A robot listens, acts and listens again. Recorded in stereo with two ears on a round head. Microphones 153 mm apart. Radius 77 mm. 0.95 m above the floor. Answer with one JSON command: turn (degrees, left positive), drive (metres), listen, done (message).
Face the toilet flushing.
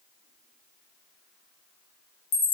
{"listen": true}
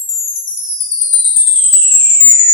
{"listen": true}
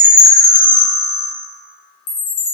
{"done": "I can't make out a toilet flushing to turn to."}